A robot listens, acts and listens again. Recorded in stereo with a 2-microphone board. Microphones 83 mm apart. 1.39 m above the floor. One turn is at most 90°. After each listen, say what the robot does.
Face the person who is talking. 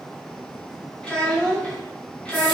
Turn 30° left.
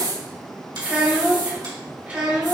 Turn 20° right.
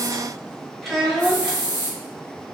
Found it: a child speaking, straight ahead.